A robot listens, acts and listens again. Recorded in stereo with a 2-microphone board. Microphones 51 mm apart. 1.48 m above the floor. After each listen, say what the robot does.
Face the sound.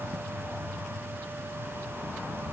Keep listening.
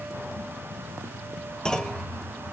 Turn 30° left.
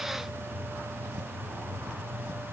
Keep listening.
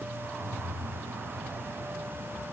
I heard a clunk, but can't make it out now. It was about 15° right or 135° left.